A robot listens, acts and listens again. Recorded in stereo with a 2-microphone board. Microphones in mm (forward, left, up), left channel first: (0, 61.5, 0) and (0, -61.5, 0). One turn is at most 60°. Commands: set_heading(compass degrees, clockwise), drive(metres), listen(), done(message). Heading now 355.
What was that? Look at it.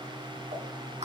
set_heading(55)
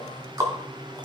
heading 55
set_heading(85)
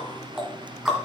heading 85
done("Found it: ticking, straight ahead, 2 to 4 m away.")